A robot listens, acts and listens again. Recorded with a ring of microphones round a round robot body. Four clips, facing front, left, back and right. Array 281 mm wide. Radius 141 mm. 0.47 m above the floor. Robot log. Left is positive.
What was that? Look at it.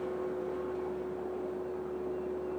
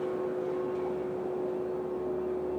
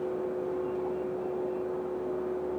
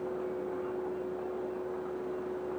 cmd idle
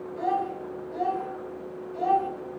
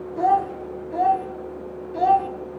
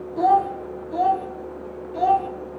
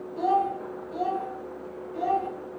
note: The child speaking: 125° left.
cmd yaw +125
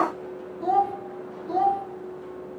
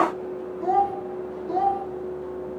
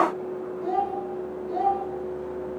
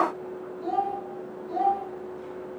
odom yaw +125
note: The child speaking is now 30° left.
cmd yaw +30
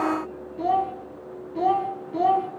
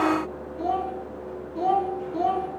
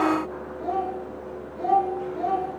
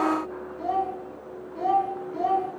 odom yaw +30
end: Found it: a child speaking, straight ahead, 2 to 4 m away.